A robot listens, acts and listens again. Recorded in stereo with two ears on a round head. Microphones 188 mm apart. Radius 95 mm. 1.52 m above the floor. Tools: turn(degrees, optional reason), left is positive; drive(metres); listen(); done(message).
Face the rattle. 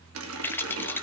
turn(degrees=30)
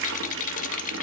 turn(degrees=140, reason="So it is at 140° left.")
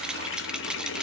done("Found it: a rattle, straight ahead, under 1 m away.")